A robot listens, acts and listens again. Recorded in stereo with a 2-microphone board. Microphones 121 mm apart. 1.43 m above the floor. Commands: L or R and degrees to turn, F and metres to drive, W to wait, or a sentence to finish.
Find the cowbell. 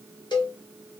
L40
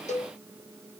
L100
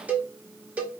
R15
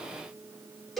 Found it: a cowbell, straight ahead.